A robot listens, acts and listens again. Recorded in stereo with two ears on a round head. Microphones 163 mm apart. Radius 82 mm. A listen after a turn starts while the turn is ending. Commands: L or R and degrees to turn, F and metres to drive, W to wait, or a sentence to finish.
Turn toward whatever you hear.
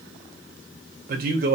R50
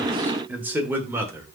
R15
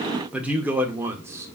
R15
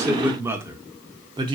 R25
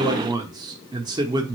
R25
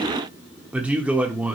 Facing the man speaking, 1 to 2 m away.